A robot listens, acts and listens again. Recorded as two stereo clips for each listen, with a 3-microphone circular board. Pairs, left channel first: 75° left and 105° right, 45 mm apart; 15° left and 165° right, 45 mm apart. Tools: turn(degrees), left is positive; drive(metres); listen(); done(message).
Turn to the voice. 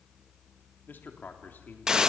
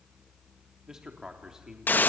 turn(degrees=115)
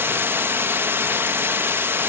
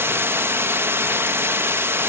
listen()
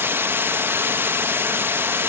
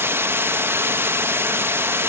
listen()
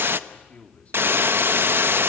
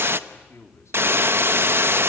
turn(degrees=10)
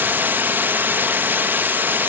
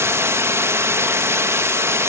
listen()
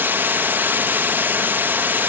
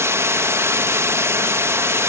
listen()
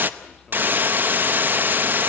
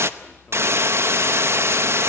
done("I heard a man speaking from this way, but can't make it out now.")